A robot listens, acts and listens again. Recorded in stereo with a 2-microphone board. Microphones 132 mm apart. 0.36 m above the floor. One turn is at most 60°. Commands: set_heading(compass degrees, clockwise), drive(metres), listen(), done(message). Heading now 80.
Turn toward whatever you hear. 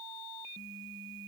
listen()
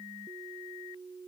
listen()
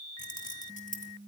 set_heading(20)
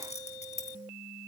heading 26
set_heading(331)
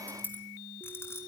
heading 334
set_heading(319)
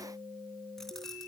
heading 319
listen()
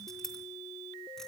done("Found it: keys jangling, straight ahead, 2 to 4 m away.")